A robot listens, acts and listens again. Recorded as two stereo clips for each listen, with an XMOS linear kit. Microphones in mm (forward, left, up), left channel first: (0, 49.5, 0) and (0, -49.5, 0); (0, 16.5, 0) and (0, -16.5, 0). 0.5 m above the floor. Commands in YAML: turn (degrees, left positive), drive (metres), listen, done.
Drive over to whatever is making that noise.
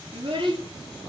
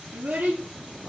turn: -55
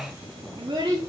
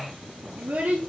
turn: -70
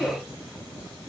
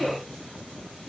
drive: 1.0
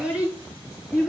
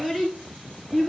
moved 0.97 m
turn: -10
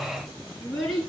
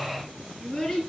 drive: 1.0
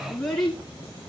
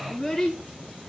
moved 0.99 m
drive: 1.0
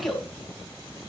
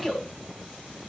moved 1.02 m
drive: 1.0
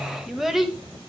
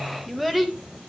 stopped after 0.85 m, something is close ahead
done: "I am next to the child speaking."